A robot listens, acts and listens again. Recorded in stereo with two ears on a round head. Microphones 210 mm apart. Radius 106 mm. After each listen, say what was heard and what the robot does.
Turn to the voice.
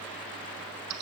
Keep listening.
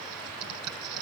Keep listening.
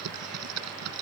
I can't make out anyone speaking, only typing on a keyboard.